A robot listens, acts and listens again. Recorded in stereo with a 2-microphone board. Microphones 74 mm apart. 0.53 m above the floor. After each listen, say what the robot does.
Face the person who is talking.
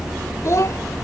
Turn 45° left.
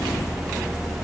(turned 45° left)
Keep listening.
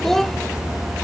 Facing the child speaking.